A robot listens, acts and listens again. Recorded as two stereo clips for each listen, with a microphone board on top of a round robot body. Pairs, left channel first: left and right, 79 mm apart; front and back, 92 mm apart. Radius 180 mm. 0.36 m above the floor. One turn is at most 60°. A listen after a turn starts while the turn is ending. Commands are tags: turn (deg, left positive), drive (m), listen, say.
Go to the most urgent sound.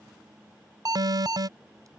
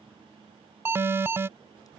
<turn deg="-60"/>
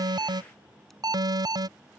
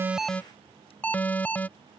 <turn deg="-60"/>
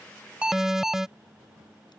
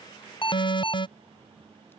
<drive m="1.0"/>
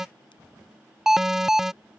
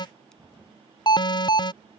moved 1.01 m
<drive m="1.0"/>
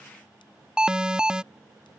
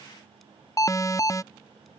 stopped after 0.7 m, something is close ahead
<turn deg="-15"/>
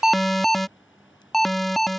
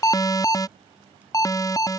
<say>I am next to the alarm.</say>